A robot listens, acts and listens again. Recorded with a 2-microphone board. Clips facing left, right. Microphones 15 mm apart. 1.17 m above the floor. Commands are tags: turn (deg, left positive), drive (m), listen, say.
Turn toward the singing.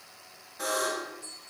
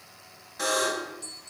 <listen/>
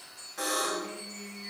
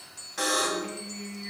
<turn deg="-35"/>
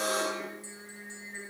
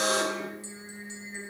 <say>Found it: singing, straight ahead.</say>